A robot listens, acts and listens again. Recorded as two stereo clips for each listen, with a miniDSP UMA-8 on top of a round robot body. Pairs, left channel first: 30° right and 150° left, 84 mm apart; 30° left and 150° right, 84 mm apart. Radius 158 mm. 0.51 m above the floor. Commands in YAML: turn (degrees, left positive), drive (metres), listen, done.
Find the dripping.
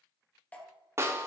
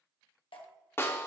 turn: 45
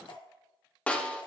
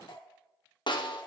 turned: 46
listen: true
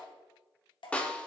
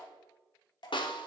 done: "Found it: dripping, straight ahead."